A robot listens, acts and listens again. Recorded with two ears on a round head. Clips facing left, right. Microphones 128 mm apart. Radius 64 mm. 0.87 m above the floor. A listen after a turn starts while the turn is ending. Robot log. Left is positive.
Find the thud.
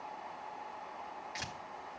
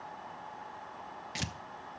cmd idle
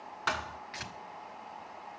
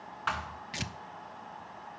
note: The thud: about 45° left or 135° left.
cmd yaw +45
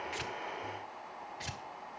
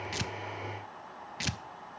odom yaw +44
cmd idle
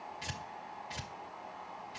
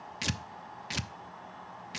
end: I heard a thud, but can't make it out now. It was about straight ahead or 90° left.